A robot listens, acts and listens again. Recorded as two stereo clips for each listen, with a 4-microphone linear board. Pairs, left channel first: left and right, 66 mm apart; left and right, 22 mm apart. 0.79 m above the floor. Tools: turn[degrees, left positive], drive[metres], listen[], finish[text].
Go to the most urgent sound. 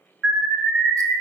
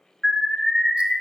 Action: turn[-30]
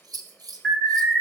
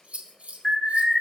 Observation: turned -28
Thought: So it is at 10° left.
Action: turn[10]
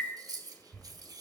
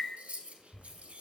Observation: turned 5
Action: listen[]
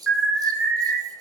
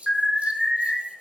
Thought: The alarm is now 10° left.
Action: turn[10]
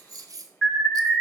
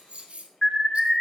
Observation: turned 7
Action: drive[1.0]
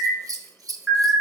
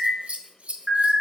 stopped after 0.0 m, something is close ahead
Action: finish[Something is in my way. I am facing the alarm but have not reached it.]